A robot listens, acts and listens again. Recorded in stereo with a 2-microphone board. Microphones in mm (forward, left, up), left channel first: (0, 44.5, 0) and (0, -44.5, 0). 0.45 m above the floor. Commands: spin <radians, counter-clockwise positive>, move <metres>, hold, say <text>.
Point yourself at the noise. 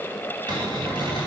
spin -1.05
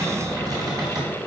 spin -0.87
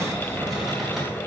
say Found it: a cupboard door, straight ahead, 2 to 4 m away.